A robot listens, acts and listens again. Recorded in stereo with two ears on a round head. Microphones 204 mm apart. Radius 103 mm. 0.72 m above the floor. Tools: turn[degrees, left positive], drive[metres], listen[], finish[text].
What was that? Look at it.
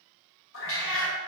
Thought: The cat meowing: about 65° left or 115° left.
Action: turn[65]
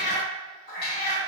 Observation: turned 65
Thought: So it is at 40° left.
Action: turn[40]
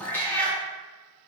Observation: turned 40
Action: finish[Found it: a cat meowing, straight ahead.]